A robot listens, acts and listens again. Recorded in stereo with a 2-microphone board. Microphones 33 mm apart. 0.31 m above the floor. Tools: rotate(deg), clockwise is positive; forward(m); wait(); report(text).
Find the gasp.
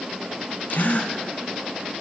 rotate(-55)
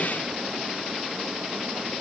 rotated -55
wait()
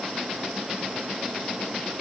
report("I heard a gasp, but can't make it out now. It was about straight ahead or 70° left.")